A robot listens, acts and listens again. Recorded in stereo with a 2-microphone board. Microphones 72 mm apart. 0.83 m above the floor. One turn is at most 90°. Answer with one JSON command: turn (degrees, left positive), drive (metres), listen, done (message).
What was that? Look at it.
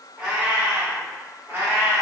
{"turn": -40}
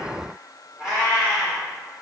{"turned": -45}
{"turn": -20}
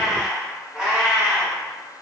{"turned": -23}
{"turn": -20}
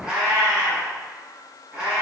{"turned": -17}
{"turn": -10}
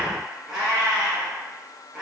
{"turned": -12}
{"done": "Found it: a cat meowing, straight ahead."}